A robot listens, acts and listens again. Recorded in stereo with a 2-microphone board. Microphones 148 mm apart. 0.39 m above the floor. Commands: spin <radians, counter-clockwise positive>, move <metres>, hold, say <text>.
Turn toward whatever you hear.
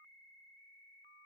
hold
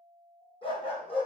spin 0.70
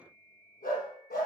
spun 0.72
spin 1.57
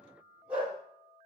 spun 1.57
spin -0.17
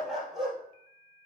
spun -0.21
say Found it: a dog barking, straight ahead.